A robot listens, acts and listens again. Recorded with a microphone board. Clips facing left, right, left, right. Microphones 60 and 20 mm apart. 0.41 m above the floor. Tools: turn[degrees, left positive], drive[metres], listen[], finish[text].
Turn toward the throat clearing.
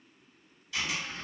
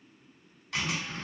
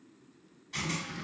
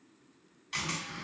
Thought: The throat clearing: about 35° right or 145° right.
Action: turn[-35]
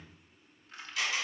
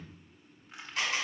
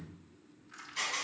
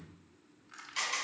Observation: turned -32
Thought: So it is at 110° right.
Action: turn[-110]
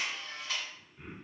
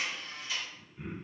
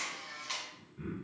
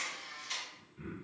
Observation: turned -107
Action: finish[Found it: throat clearing, straight ahead.]